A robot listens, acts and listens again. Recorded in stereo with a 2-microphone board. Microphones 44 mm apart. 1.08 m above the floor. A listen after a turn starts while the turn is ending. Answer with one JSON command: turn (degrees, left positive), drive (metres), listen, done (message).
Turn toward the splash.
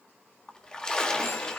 {"turn": 20}
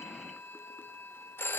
{"listen": true}
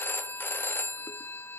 {"done": "I heard a splash, but can't make it out now. It was about straight ahead or 140° left."}